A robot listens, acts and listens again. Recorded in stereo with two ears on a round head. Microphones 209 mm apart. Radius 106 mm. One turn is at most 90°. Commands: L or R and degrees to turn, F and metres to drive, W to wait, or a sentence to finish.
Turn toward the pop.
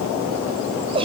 W
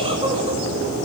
W
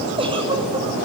I can't make out a pop, only a giggle.